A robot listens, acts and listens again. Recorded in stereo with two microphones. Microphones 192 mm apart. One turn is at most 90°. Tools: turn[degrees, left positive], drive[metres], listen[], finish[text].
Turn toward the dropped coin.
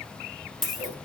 Action: turn[30]
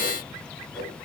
Action: listen[]
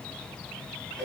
Action: finish[I heard a dropped coin, but can't make it out now. It was about 30° right or 150° left.]